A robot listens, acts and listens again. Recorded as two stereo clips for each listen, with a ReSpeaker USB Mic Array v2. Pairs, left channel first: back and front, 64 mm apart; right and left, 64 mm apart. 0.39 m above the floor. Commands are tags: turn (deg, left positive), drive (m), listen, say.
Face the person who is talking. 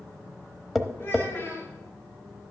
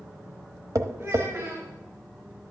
<turn deg="125"/>
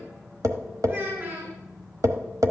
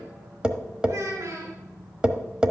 <turn deg="50"/>
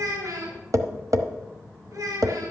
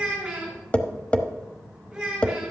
<turn deg="10"/>
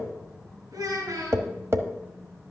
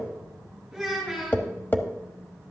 <say>Facing the child speaking.</say>